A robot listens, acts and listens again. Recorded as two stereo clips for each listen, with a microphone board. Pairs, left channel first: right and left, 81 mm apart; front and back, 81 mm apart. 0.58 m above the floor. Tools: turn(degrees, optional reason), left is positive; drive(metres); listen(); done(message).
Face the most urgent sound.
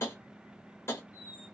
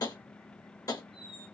listen()
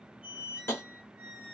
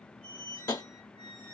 listen()
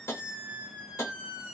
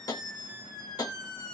done("I can't make out anything urgent, only a squeak and tapping.")